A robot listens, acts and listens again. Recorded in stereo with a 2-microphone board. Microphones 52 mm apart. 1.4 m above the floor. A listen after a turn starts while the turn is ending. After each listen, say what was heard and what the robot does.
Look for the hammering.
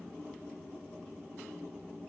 Keep listening.
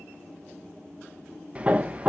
The hammering: about 20° right or 160° right. Turn 20° right.
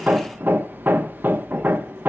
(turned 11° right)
So it is at 145° right. Turn 145° right.
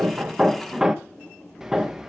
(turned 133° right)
The hammering is now 10° right. Turn 10° right.
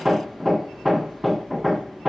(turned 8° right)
Facing the hammering.